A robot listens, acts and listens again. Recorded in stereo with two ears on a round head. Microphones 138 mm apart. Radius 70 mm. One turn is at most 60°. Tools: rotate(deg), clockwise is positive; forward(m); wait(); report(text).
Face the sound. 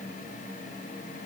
wait()
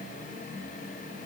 wait()
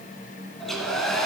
rotate(-30)
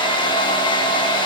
rotate(-60)
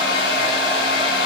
rotate(-60)
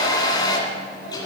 rotate(-25)
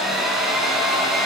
report("Found it: a hair dryer, straight ahead, 2 to 4 m away.")